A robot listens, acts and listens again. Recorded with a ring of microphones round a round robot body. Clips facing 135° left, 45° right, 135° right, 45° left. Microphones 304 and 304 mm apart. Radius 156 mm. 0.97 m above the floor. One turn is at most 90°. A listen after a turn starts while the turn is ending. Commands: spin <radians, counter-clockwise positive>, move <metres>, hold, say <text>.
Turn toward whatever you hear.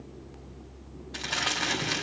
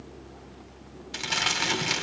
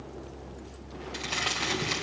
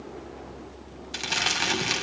say Facing the crumpling.